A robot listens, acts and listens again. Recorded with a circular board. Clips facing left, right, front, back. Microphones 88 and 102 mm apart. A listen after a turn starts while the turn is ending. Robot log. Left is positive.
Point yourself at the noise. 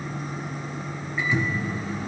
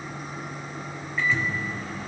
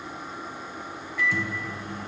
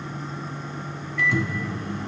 note: The microwave: 165° left.
cmd yaw +165
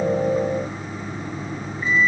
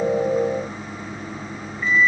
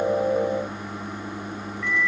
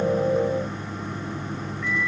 note: The microwave is now 20° left.
cmd yaw +20
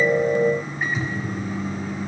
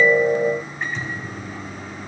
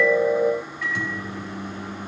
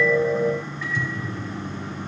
end: Facing the microwave.